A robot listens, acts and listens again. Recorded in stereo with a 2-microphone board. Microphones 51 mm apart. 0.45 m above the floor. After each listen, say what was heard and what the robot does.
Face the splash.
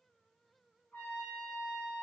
Keep listening.
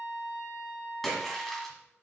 Turn 30° left.
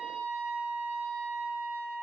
Keep listening.
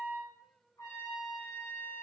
I heard a splash, but can't make it out now. It was about 25° right or 145° left.